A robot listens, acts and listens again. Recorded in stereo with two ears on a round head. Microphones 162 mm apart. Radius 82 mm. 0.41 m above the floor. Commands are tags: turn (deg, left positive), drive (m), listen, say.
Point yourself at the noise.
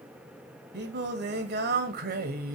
<turn deg="-55"/>
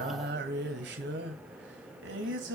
<turn deg="-70"/>
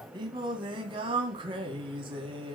<turn deg="-30"/>
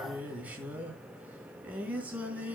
<turn deg="-10"/>
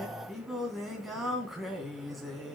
<say>Found it: singing, straight ahead.</say>